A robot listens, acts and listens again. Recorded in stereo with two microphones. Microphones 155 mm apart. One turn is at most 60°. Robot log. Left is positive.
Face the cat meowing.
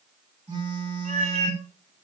note: The cat meowing: about 50° right or 130° right.
cmd yaw -50
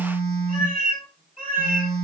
note: So it is at 75° right.
cmd yaw -60
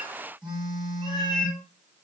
note: The cat meowing is now 35° right.
cmd yaw -35
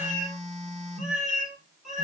end: Facing the cat meowing, 2 to 4 m away.